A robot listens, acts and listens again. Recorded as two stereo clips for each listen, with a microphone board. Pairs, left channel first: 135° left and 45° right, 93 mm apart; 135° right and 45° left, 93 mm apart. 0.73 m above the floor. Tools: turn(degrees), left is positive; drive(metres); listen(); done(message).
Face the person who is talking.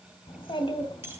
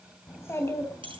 turn(degrees=160)
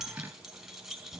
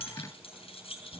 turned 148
turn(degrees=15)
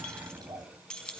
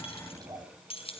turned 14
done("Facing the child speaking.")